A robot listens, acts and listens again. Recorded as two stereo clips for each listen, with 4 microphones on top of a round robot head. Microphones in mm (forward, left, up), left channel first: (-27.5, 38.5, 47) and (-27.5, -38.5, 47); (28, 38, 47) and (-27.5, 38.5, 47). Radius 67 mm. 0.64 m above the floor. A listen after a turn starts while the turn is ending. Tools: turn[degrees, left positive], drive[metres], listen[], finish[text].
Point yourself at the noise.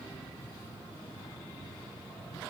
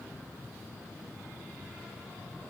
Action: listen[]
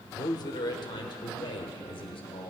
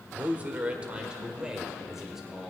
Thought: The man speaking: 95° left.
Action: turn[95]
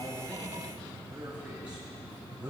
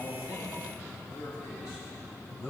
Thought: The man speaking is now 15° right.
Action: turn[-15]
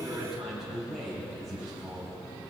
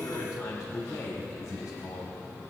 Action: finish[Found it: a man speaking, straight ahead.]